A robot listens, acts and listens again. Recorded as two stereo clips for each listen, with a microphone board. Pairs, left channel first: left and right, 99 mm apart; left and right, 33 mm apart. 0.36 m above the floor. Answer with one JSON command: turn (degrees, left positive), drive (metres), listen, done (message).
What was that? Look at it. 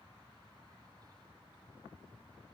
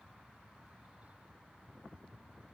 {"listen": true}
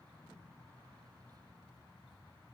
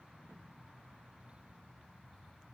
{"listen": true}
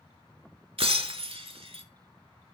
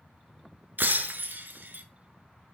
{"turn": -70}
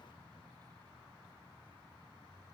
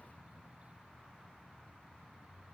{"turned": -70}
{"listen": true}
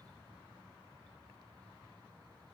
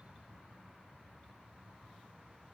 {"done": "I heard breaking glass, but can't make it out now. It was about straight ahead or 40° right."}